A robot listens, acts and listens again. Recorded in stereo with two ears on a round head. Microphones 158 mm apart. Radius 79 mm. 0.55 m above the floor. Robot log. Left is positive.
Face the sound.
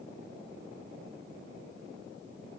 cmd idle
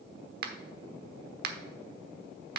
note: The finger snap: about 55° right or 125° right.
cmd yaw -55
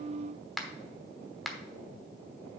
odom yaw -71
end: Facing the finger snap, 1 to 2 m away.